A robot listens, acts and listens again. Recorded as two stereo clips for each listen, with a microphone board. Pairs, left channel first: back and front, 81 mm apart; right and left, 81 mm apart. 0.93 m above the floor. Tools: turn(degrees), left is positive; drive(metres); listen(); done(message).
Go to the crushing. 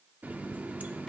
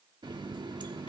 listen()
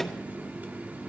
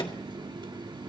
listen()
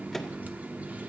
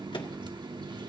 done("I can't make out crushing, only a running tap.")